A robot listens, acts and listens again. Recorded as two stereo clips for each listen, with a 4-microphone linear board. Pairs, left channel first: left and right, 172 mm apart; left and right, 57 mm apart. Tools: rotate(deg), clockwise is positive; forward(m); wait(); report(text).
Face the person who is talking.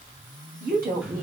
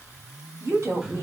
rotate(60)
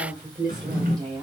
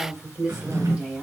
rotate(20)
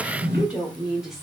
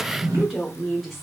report("Found it: a woman speaking, straight ahead, 1 to 2 m away.")